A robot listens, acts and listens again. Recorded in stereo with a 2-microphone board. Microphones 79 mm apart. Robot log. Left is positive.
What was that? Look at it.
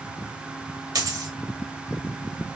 note: The dropped coin: about 50° right or 130° right.
cmd yaw -50
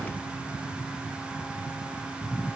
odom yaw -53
cmd idle
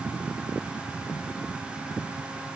end: I heard a dropped coin, but can't make it out now. It was about 5° left or 75° right.